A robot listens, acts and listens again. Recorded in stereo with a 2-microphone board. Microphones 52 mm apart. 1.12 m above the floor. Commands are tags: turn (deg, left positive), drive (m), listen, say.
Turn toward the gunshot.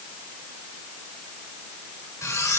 <listen/>
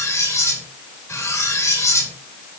<listen/>
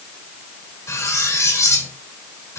<say>I can't make out a gunshot, only cutlery clinking.</say>